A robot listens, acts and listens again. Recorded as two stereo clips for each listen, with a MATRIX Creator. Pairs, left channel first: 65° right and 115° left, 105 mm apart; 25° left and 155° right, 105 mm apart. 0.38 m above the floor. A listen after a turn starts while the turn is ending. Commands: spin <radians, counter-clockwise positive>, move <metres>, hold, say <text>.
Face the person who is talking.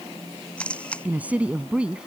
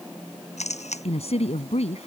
spin 0.52
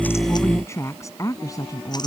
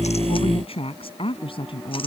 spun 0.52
spin -0.26
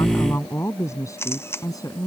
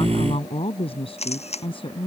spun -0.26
spin -0.26
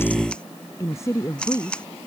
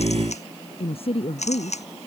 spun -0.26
say Facing the woman speaking.